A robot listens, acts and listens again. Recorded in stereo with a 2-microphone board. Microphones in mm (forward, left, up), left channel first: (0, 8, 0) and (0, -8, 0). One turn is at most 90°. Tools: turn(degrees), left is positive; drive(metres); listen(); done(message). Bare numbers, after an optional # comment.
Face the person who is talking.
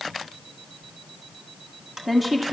turn(-30)
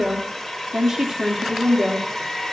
# So it is at 140° right.
turn(-90)
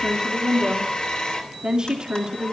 # The woman speaking is now 45° right.
turn(-45)
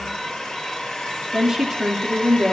# The woman speaking is now 25° right.
turn(-25)
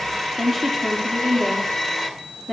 # The woman speaking is now 10° left.
turn(10)
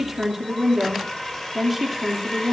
done("Found it: a woman speaking, straight ahead, 2 to 4 m away.")